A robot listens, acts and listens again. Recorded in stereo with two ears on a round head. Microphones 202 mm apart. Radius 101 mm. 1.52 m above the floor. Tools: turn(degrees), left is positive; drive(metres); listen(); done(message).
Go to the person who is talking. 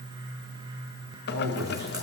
turn(degrees=-90)
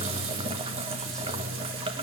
listen()
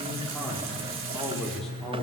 drive(metres=1.0)
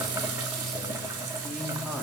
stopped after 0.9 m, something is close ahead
listen()
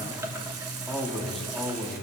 done("Blocked. The man speaking is further on, straight ahead.")